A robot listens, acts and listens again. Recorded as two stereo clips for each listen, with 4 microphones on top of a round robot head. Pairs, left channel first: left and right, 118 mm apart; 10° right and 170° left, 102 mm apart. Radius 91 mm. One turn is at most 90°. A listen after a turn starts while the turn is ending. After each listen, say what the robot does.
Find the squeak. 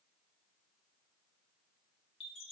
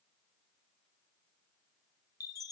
Keep listening.
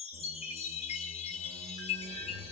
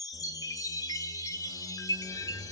Turn 70° right.
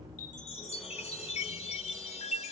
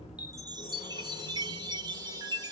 Keep listening.
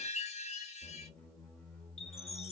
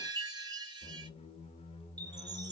Turn 10° left.
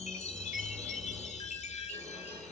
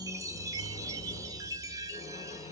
Facing the squeak.